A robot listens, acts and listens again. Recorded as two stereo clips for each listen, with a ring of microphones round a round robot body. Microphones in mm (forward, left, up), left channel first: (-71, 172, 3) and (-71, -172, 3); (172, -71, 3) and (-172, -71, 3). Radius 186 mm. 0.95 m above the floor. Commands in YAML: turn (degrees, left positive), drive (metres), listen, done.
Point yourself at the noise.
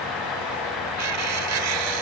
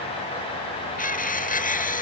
turn: -65
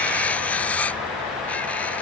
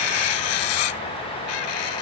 done: "Facing the cutlery clinking."